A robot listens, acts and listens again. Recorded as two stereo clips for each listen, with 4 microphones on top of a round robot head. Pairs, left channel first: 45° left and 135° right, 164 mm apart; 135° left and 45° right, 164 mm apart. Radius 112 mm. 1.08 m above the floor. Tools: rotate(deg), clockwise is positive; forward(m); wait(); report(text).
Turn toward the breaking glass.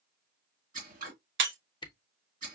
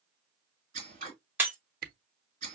rotate(125)
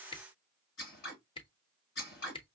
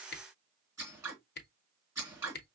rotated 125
report("I heard breaking glass from this way, but can't make it out now.")